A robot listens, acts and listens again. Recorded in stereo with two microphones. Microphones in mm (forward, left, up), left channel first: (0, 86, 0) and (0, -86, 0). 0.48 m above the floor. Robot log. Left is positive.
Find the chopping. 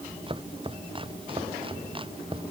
note: The chopping: about 30° right or 150° right.
cmd yaw -30
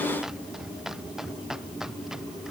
end: Facing the chopping.